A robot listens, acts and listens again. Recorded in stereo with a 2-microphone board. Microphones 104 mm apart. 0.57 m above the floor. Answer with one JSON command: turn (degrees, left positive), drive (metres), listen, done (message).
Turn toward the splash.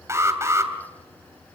{"listen": true}
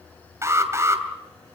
{"listen": true}
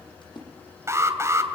{"turn": 50}
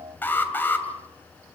{"listen": true}
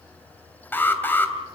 {"done": "I heard a splash, but can't make it out now. It was about straight ahead or 80° left."}